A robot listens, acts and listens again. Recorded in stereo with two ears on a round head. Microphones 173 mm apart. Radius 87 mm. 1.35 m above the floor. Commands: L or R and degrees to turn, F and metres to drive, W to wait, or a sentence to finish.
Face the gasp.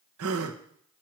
R90
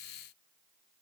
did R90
I heard a gasp from this way, but can't make it out now.